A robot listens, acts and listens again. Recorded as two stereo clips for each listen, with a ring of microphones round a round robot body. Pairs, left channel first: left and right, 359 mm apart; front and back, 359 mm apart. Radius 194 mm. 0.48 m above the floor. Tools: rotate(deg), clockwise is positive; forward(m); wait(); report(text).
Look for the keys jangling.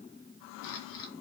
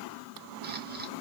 wait()
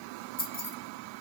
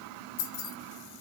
rotate(-25)
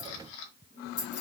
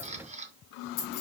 rotate(-35)
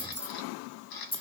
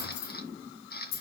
rotate(-15)
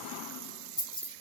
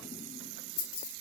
rotate(-15)
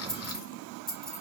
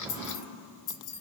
report("Found it: keys jangling, straight ahead, 2 to 4 m away.")